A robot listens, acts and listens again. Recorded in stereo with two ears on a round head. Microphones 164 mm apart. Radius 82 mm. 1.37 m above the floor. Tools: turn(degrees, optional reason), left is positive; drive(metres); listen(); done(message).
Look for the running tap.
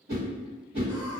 listen()
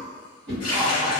turn(degrees=25, reason="The running tap: about 25° left or 155° left.")
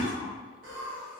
listen()
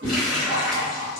done("Found it: a running tap, straight ahead, under 1 m away.")